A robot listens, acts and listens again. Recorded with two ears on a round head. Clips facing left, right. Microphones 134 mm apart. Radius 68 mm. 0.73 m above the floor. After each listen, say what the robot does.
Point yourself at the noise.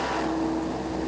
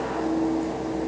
Keep listening.
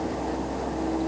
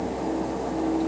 Keep listening.
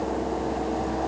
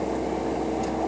I can't make out anything.